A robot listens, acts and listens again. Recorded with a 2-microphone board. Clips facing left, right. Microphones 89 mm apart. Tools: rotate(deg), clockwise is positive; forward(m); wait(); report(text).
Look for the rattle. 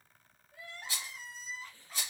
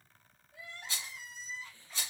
rotate(-30)
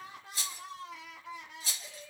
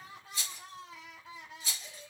rotate(-135)
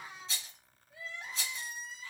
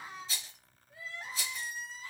report("Facing the rattle, 1 to 2 m away.")